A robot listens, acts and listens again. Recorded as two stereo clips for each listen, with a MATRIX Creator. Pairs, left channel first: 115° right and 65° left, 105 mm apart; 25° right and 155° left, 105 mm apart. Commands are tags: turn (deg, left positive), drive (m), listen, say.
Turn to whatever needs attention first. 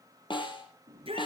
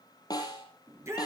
<turn deg="95"/>
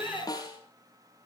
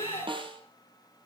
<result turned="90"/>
<say>Found it: a shout, straight ahead, over 4 m away.</say>